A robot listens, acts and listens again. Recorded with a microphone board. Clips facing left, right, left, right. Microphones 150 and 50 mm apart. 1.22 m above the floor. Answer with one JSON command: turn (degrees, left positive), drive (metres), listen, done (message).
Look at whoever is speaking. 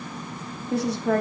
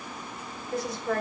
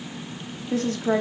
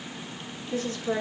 {"turn": 70}
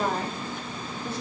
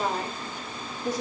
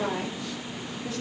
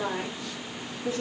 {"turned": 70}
{"turn": -15}
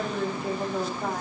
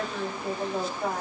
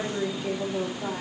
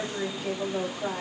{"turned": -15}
{"done": "Found it: a woman speaking, straight ahead, 2 to 4 m away."}